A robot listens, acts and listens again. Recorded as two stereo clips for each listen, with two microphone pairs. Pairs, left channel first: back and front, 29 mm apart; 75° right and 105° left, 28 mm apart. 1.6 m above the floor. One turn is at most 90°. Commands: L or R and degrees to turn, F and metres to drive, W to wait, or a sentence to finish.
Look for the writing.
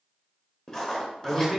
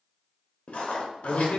R90
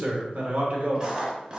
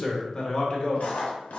R60
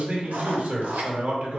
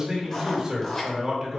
Found it: writing, straight ahead.